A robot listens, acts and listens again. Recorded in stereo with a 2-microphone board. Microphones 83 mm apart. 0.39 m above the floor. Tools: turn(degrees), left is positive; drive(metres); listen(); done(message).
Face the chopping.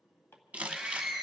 turn(degrees=25)
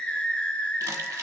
listen()
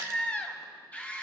listen()
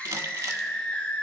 done("I heard chopping, but can't make it out now. It was about straight ahead or 130° left.")